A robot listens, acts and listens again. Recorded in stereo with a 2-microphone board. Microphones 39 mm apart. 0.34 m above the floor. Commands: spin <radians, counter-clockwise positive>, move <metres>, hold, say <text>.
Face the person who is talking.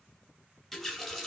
hold
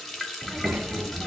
spin -0.87
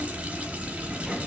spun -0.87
spin -0.26
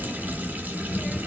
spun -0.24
say Found it: a child speaking, straight ahead, under 1 m away.